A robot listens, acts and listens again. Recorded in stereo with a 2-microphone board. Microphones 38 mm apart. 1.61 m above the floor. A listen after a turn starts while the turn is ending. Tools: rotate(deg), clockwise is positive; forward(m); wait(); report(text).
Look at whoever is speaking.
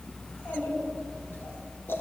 rotate(-70)
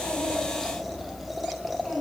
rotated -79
rotate(-20)
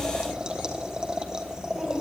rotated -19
report("Facing the child speaking.")